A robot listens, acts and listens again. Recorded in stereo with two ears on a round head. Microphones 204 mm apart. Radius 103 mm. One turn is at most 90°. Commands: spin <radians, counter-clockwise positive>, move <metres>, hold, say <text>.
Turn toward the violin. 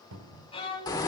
spin 0.44
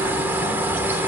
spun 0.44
hold
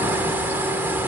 hold
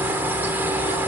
say I heard a violin, but can't make it out now. It was about straight ahead or 130° left.